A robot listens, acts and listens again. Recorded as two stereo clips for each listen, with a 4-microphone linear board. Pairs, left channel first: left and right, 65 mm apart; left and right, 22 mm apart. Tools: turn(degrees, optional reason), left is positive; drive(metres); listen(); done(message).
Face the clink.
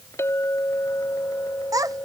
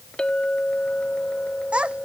turn(degrees=45, reason="The clink: about 45° left or 135° left.")
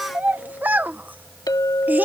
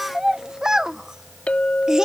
turn(degrees=85, reason="So it is at 85° left.")
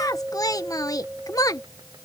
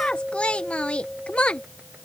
turn(degrees=-20, reason="The clink is now 20° right.")
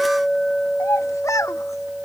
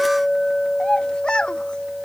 done("Found it: a clink, straight ahead.")